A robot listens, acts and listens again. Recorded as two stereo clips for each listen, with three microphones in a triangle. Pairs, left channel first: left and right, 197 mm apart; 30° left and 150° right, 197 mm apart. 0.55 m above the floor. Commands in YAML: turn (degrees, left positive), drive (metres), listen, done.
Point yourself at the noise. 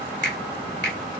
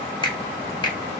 turn: 95
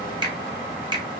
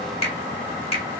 turn: -30
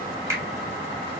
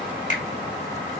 turn: -15
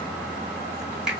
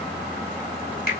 done: "Found it: a finger snap, straight ahead."